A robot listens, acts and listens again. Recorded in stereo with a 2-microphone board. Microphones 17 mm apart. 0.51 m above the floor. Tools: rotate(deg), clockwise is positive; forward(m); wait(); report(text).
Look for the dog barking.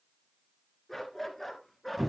rotate(-30)
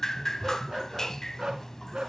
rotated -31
rotate(55)
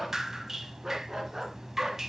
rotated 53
rotate(30)
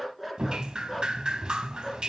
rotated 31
rotate(10)
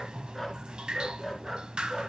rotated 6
report("Found it: a dog barking, straight ahead, 2 to 4 m away.")